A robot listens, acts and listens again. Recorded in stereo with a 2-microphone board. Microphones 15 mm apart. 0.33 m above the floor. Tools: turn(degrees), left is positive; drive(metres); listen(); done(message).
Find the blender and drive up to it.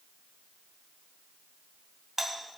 listen()
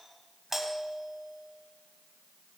listen()
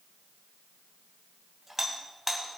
done("I can't make out a blender to turn to.")